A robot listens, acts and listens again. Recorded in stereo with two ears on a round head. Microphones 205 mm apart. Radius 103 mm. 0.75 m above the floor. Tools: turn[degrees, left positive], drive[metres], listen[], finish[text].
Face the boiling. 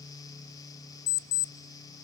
Action: listen[]
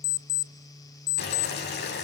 Thought: The boiling: about 45° left or 135° left.
Action: turn[45]
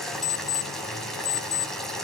Action: finish[Facing the boiling, over 4 m away.]